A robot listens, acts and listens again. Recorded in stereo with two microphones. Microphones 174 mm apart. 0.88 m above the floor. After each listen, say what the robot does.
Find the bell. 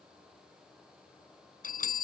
Turn 55° left.
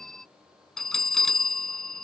Found it: a bell, straight ahead.